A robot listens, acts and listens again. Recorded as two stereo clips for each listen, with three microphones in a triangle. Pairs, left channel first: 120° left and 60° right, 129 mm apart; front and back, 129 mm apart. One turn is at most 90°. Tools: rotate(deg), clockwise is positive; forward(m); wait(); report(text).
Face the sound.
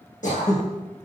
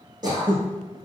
rotate(-90)
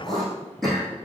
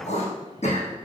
rotate(-30)
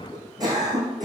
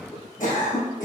report("Found it: throat clearing, straight ahead.")